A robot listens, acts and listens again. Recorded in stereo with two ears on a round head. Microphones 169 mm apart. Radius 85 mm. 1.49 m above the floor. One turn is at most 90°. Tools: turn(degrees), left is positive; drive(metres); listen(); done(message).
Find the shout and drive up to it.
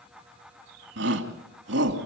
turn(degrees=-65)
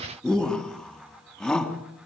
drive(metres=1.0)
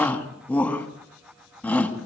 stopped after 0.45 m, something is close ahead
done("Blocked. The shout is further on, straight ahead.")